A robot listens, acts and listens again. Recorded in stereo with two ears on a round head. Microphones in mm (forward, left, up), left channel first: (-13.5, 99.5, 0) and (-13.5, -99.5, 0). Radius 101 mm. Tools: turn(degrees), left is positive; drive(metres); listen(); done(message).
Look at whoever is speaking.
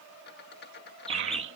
turn(degrees=-50)
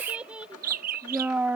done("Found it: a child speaking, straight ahead.")